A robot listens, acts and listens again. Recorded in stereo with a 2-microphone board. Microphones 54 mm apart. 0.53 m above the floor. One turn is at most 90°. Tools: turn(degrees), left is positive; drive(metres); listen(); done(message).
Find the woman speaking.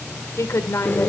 turn(degrees=60)
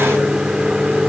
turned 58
listen()
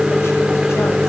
listen()
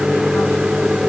done("I heard a woman speaking, but can't make it out now. It was about straight ahead or 60° left.")